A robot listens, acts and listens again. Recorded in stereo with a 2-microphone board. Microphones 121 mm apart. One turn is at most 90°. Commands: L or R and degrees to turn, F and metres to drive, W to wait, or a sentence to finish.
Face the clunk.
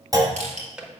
R30
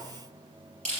W
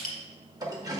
I heard a clunk, but can't make it out now. It was about straight ahead or 120° right.